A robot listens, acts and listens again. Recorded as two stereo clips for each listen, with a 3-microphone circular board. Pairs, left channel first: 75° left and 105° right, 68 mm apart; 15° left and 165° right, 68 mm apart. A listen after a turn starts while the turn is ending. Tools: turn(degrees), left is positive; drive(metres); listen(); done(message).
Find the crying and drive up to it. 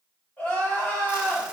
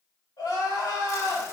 turn(degrees=10)
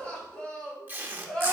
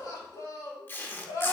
drive(metres=1.0)
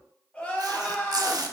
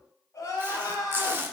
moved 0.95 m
drive(metres=1.0)
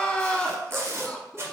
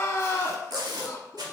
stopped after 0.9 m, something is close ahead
done("I am next to the crying.")